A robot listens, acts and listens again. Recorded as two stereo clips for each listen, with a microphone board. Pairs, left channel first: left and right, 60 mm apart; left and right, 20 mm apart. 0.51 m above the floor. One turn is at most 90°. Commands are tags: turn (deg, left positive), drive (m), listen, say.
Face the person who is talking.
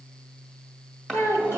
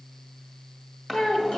<turn deg="45"/>
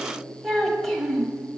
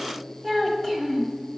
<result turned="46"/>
<say>Facing the child speaking, 1 to 2 m away.</say>